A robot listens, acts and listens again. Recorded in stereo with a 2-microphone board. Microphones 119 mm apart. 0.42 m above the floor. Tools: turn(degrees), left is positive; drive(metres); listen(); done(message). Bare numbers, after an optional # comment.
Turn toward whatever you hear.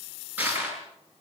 turn(-30)
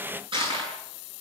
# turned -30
# So it is at 135° right.
turn(-135)
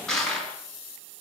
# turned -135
done("Facing the crushing.")